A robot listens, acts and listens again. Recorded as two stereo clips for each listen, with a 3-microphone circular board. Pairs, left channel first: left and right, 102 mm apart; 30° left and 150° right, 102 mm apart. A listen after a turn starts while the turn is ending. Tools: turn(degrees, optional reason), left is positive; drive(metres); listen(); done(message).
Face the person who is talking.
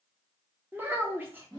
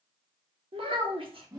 turn(degrees=-155, reason="The child speaking: 155° right.")
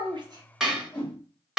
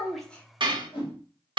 listen()
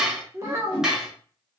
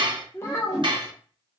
turn(degrees=-35, reason="The child speaking is now 35° right.")
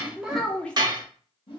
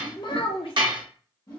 turn(degrees=15, reason="The child speaking is now 15° left.")
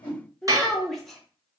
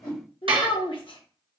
done("Facing the child speaking, under 1 m away.")